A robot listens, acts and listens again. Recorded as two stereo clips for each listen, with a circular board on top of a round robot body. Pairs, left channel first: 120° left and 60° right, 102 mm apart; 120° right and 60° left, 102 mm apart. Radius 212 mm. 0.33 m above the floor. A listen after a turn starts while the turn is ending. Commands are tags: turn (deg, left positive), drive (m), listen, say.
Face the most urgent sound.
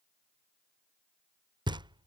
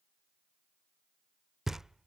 <listen/>
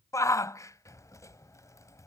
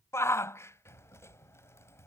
<turn deg="180"/>
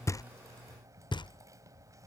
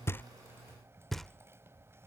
<listen/>
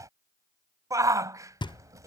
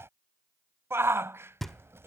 <say>Facing the shout.</say>